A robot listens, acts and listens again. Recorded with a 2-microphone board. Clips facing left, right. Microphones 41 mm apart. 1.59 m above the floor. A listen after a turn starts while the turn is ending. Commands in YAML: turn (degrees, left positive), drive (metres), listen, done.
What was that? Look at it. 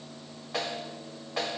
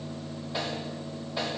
turn: 75
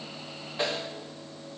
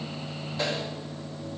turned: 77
turn: 30
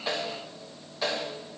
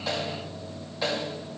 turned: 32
done: "Found it: a snare drum, straight ahead."